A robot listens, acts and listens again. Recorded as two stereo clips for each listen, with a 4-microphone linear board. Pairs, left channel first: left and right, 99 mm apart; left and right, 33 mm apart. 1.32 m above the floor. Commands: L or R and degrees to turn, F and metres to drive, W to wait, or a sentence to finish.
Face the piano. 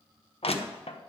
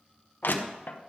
W
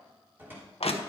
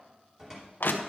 W
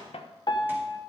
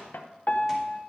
L50
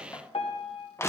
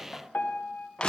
L75
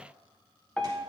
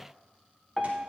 L10
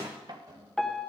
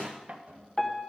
Found it: a piano, straight ahead.